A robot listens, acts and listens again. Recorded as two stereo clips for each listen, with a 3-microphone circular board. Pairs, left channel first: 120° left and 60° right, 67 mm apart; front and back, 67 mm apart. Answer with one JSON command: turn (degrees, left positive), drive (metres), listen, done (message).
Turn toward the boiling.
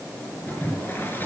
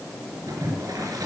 {"turn": 180}
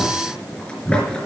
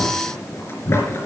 {"turn": 45}
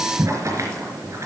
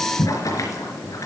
{"turn": -20}
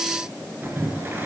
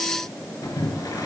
{"done": "Found it: boiling, straight ahead."}